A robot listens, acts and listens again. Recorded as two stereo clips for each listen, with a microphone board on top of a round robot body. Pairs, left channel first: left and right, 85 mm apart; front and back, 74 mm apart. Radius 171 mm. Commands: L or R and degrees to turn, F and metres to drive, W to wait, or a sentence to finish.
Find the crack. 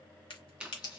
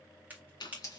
L110
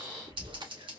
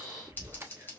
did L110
Facing where the crack came from. I can't hear it now.